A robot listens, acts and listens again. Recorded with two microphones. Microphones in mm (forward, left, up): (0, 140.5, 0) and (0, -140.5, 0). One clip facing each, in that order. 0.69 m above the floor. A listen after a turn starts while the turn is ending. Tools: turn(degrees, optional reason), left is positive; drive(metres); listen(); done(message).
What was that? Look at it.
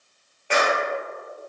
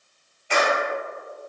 turn(degrees=90)
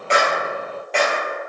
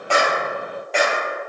done("Facing the clap, 2 to 4 m away.")